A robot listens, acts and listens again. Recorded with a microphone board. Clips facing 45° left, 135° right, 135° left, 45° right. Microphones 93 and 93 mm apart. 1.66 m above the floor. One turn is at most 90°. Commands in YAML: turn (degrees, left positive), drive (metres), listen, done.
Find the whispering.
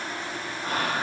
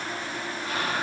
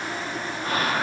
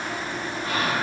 turn: 90
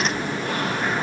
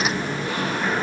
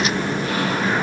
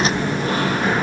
listen: true
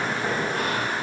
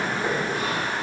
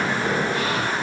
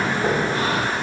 listen: true
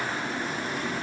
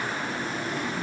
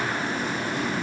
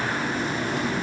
done: "Facing where the whispering came from. I can't hear it now."